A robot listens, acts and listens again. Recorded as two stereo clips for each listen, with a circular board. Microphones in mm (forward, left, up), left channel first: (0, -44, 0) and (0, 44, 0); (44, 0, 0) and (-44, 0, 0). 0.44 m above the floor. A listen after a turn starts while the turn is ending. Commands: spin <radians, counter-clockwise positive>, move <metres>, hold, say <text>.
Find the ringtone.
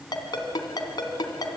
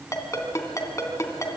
spin -0.96
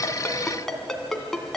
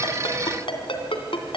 say Facing the ringtone.